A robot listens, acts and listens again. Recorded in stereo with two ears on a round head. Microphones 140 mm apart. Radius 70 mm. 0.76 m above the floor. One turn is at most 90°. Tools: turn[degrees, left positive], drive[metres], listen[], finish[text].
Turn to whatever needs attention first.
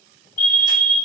Thought: The fire alarm: about 55° left or 125° left.
Action: turn[55]
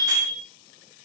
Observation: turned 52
Thought: So it is at 15° left.
Action: turn[15]
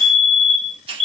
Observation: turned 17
Action: finish[Found it: a fire alarm, straight ahead.]